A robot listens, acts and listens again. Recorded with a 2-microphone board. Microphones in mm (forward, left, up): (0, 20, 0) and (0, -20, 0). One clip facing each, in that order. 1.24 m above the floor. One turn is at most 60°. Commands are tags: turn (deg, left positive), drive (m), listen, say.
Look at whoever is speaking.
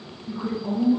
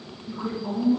<turn deg="20"/>
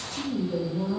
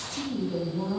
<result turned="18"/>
<say>Found it: a woman speaking, straight ahead, 1 to 2 m away.</say>